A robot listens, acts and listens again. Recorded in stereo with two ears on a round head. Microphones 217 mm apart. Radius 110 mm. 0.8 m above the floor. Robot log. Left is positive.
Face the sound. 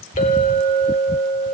note: The clink: about 30° left or 150° left.
cmd yaw +30
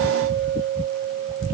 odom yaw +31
end: Found it: a clink, straight ahead.